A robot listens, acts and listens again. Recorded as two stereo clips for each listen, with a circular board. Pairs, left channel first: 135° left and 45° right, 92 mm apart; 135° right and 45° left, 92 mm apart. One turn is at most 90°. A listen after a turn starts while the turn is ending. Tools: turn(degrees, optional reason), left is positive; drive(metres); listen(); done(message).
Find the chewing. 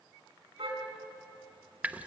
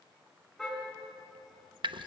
listen()
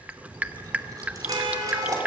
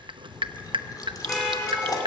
turn(degrees=-90, reason="The chewing: 90° right.")
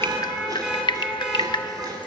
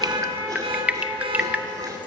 listen()
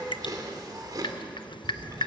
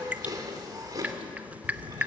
done("Found it: chewing, straight ahead, 2 to 4 m away.")